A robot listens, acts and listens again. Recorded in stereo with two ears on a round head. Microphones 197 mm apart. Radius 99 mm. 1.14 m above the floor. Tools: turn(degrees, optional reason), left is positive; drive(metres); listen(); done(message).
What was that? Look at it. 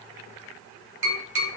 turn(degrees=-55, reason="The tapping: about 55° right or 125° right.")
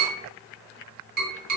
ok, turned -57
turn(degrees=-50, reason="So it is at 50° right.")
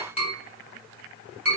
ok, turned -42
turn(degrees=-10, reason="The tapping is now 10° right.")
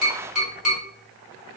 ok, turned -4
done("Facing the tapping, 1 to 2 m away.")